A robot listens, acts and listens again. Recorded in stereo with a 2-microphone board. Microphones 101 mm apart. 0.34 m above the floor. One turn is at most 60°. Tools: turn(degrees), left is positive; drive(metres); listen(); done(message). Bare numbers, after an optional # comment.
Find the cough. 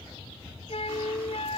listen()
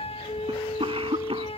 # The cough: about 65° right or 115° right.
turn(-60)
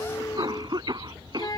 # So it is at 45° right.
turn(-45)
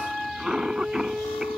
done("Facing the cough.")